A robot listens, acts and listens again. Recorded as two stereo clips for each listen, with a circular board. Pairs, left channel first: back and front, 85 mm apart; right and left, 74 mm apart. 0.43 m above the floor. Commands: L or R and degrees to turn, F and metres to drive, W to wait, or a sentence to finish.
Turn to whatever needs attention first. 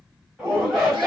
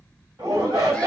L85
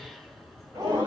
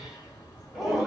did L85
Found it: a shout, straight ahead.